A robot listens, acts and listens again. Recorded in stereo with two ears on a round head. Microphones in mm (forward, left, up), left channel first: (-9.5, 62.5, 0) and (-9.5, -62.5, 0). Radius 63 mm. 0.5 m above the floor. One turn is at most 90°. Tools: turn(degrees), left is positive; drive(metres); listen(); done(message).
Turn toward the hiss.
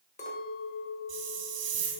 turn(degrees=-50)
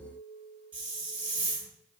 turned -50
turn(degrees=-10)
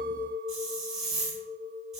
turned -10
done("Facing the hiss, 1 to 2 m away.")